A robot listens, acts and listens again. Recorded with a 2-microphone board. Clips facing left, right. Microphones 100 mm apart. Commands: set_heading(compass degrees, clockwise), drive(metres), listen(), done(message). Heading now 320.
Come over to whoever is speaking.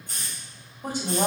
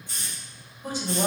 set_heading(255)
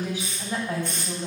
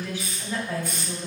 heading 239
set_heading(219)
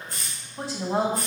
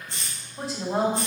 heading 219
drive(1.0)
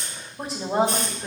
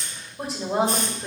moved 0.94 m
drive(1.0)
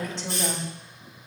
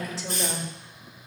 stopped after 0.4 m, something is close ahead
done("Arrived at the woman speaking, straight ahead.")